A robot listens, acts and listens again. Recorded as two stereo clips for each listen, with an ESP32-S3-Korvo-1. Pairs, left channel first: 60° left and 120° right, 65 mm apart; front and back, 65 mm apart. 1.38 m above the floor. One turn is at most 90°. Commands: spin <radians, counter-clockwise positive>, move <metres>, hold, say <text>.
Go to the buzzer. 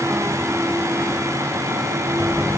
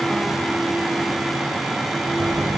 spin -1.57
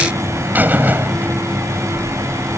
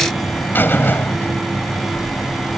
spin -1.05
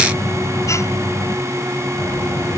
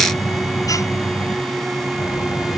spin 0.35
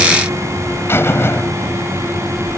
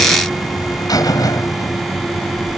spin 0.17
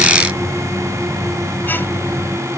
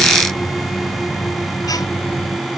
move 1.0
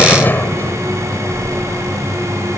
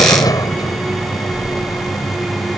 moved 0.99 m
move 1.0
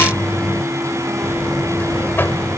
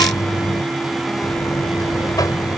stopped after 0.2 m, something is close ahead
say Blocked. The buzzer is further on, straight ahead.